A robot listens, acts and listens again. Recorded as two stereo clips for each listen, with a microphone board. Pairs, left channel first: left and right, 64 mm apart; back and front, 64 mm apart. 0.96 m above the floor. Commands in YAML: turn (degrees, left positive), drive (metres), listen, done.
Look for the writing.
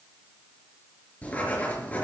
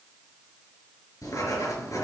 turn: 155
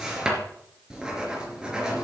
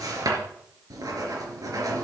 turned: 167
turn: -10
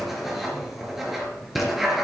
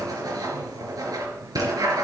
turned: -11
done: "Found it: writing, straight ahead."